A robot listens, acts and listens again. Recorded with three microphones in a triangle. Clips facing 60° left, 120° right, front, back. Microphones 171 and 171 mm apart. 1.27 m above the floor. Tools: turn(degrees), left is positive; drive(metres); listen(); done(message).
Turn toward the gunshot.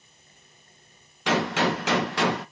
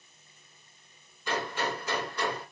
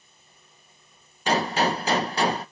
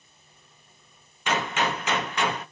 turn(degrees=55)
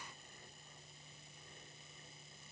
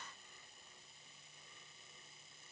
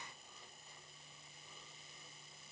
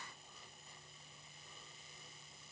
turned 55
done("I heard a gunshot from this way, but can't make it out now.")